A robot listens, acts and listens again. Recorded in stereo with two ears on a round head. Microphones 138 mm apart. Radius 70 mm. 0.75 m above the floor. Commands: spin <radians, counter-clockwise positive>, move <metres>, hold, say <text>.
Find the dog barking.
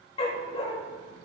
spin 0.70
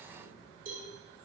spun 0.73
hold
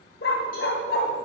spin 1.66
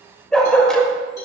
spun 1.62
say Found it: a dog barking, straight ahead.